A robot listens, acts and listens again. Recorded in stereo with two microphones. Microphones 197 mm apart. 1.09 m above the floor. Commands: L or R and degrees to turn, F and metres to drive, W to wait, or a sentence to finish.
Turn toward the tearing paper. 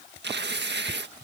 R60
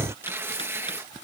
R15
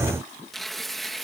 Facing the tearing paper.